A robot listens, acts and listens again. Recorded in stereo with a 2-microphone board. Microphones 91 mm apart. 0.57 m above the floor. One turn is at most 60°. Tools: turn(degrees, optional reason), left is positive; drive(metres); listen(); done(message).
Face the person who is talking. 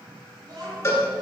turn(degrees=-50, reason="The child speaking: about 50° right or 130° right.")
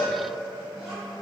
done("Facing the child speaking, 2 to 4 m away.")